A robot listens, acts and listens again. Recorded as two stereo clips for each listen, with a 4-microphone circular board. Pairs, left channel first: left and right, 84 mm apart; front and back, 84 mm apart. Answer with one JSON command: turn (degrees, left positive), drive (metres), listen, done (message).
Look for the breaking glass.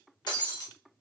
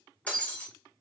{"turn": 70}
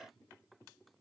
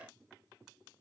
{"done": "Facing where the breaking glass came from. I can't hear it now."}